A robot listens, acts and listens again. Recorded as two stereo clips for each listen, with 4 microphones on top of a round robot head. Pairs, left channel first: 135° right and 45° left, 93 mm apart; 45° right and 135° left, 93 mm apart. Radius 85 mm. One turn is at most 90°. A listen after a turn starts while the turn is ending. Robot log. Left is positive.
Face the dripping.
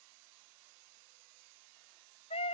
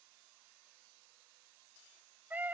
cmd idle
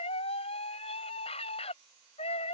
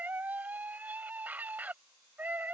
cmd idle
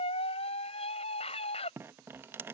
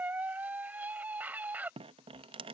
note: The dripping: 115° left.
cmd yaw +90
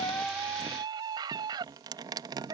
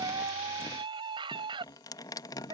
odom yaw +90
end: Found it: dripping, straight ahead.